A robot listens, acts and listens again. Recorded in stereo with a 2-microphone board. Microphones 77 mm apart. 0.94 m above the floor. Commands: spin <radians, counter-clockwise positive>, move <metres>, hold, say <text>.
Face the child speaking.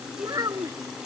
spin -0.87
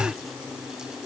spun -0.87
hold
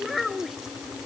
say Found it: a child speaking, straight ahead.